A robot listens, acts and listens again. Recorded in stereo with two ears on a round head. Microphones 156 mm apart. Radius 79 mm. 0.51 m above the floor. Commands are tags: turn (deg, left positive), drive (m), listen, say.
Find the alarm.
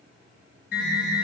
<turn deg="60"/>
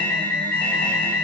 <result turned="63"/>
<turn deg="10"/>
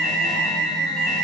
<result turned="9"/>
<say>Found it: an alarm, straight ahead, over 4 m away.</say>